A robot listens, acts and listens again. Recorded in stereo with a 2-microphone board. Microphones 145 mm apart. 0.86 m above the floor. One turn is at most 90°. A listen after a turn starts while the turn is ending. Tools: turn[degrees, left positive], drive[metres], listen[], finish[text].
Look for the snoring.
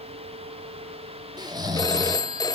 Thought: The snoring: about 30° right or 150° right.
Action: turn[-30]
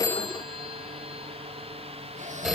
Action: listen[]
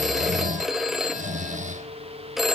Thought: So it is at 120° right.
Action: turn[-90]
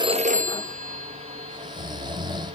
Thought: The snoring is now 30° right.
Action: turn[-30]
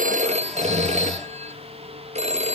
Action: listen[]
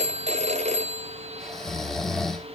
Action: finish[Found it: snoring, straight ahead.]